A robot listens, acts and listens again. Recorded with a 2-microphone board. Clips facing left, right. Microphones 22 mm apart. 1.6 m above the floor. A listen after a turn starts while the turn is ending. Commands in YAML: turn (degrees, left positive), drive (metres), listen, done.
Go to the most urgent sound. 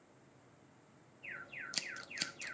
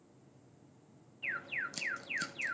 turn: -70
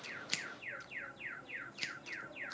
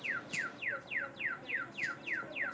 turn: -40
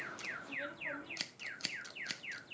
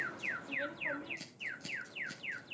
turn: -15
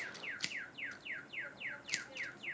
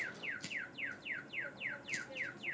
drive: 1.0
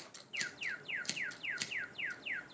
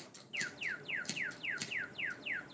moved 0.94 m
drive: 1.0
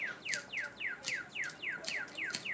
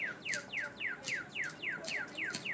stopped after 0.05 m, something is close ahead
done: "Arrived at the alarm, straight ahead."